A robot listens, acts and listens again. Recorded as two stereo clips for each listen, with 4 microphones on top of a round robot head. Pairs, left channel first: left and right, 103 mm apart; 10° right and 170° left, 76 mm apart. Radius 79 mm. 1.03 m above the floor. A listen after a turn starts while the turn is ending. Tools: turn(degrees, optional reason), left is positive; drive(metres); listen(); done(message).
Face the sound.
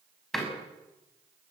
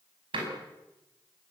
turn(degrees=180, reason="The door slam: straight behind.")
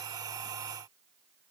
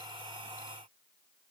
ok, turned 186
turn(degrees=-10, reason="Nothing new. It was at 10° right.")
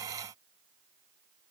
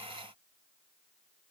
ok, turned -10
done("I heard a door slam from this way, but can't make it out now.")